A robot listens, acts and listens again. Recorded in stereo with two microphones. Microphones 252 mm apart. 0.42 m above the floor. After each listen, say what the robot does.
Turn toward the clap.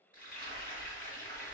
Keep listening.
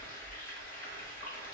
Keep listening.
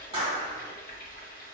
Turn 25° right.
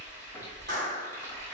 Turn 130° right.
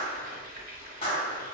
Turn 25° left.
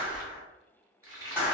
Facing the clap.